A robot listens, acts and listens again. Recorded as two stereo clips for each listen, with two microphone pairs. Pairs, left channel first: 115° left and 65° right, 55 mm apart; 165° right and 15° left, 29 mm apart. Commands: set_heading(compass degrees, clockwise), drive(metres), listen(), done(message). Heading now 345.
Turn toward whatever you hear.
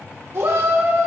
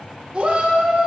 set_heading(20)
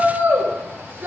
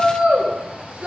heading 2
set_heading(22)
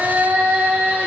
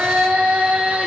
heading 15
done("Found it: a shout, straight ahead.")